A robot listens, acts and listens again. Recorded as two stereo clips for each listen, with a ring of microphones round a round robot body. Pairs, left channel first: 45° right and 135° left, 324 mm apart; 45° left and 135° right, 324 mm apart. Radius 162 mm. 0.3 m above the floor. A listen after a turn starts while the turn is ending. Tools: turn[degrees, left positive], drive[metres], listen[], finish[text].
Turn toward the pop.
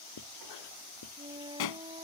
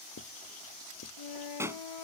Thought: The pop: 55° right.
Action: turn[-55]
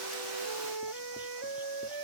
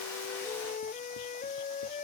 Action: finish[Facing where the pop came from. I can't hear it now.]